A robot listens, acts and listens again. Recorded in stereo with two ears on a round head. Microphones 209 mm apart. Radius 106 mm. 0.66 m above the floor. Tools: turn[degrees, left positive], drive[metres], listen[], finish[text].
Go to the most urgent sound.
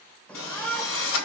Action: turn[30]
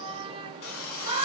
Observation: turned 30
Thought: So it is at 25° right.
Action: turn[-25]
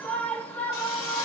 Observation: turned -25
Action: drive[1.0]
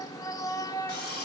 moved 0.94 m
Thought: The shout is now 15° left.
Action: turn[15]
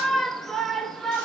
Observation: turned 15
Action: drive[1.0]
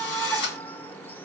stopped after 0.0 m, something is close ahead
Thought: The shout is now 10° left.
Action: turn[10]
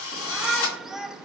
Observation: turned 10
Action: finish[I am next to the shout.]